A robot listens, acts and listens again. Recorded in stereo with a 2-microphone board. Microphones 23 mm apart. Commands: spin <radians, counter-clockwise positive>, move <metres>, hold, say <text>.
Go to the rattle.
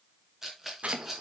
spin -0.52
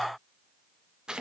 hold
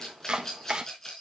spin 0.35
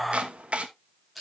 move 1.0
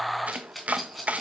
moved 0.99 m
move 1.0
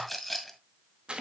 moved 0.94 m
move 1.0
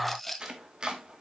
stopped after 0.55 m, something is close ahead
spin 0.17
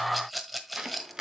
say I am next to the rattle.